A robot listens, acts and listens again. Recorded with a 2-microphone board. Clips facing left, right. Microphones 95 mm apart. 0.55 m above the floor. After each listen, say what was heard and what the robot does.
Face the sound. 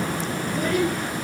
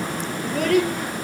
Turn 90° right.
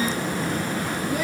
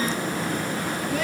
Keep listening.
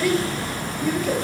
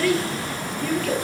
The child speaking is now 10° left. Turn 10° left.
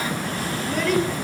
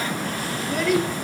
Facing the child speaking, over 4 m away.